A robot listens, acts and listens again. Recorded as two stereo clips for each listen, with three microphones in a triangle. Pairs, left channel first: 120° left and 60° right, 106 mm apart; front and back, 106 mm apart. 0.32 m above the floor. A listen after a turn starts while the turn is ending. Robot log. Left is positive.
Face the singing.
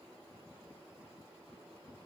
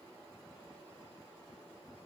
cmd idle
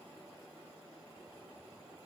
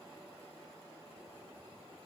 cmd idle
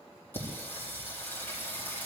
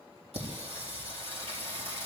note: The singing: 175° right.
cmd yaw -175
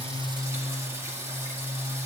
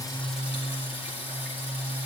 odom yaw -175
end: Facing the singing, over 4 m away.